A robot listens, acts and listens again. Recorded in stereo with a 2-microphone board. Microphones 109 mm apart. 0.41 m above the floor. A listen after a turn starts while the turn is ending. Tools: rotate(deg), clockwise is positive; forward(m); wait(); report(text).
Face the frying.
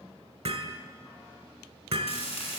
rotate(-70)
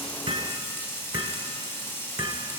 rotate(-25)
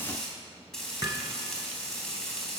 report("Found it: frying, straight ahead, 2 to 4 m away.")